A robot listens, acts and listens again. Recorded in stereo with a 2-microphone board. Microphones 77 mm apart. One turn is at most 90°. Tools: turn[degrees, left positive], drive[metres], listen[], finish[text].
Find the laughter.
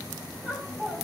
Thought: The laughter: about 20° right or 160° right.
Action: turn[-20]
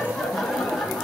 Action: finish[Facing the laughter, over 4 m away.]